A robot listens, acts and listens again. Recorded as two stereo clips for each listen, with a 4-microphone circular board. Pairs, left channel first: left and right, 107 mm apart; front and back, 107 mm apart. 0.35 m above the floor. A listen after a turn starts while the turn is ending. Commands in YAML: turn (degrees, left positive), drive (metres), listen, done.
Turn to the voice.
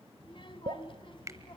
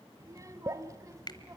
turn: 125
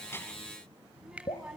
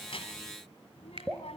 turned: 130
done: "Facing the child speaking."